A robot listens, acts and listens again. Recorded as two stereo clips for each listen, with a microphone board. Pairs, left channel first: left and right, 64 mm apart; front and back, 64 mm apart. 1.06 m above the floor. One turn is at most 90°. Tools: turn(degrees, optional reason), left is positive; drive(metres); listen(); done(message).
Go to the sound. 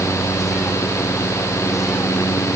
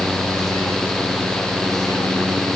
listen()
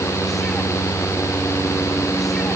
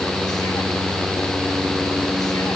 listen()
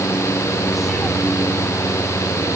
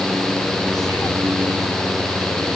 done("I can't make out anything to turn to.")